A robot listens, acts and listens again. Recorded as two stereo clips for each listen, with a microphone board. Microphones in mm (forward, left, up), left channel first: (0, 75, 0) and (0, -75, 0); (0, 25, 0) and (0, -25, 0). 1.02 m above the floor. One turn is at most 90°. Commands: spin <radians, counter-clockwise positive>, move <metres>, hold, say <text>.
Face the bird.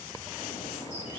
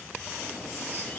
hold
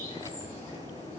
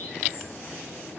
spin 0.79
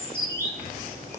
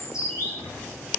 spin 1.48
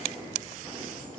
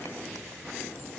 spin 0.17
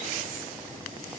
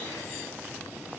hold
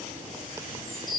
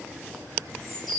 say Facing the bird.